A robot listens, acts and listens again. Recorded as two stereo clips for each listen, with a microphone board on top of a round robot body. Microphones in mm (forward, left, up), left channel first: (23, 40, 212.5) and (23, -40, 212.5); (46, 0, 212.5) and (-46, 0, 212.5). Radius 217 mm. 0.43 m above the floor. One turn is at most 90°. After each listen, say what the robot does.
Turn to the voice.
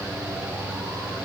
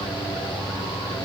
Keep listening.
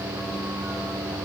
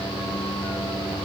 Keep listening.
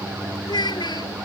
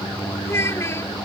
Turn 60° left.
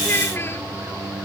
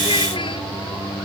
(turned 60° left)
Keep listening.
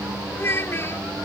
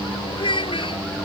Turn 30° left.
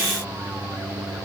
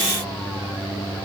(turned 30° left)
Keep listening.
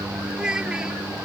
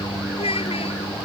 Turn 10° right.
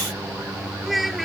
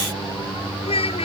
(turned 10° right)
Facing the child speaking.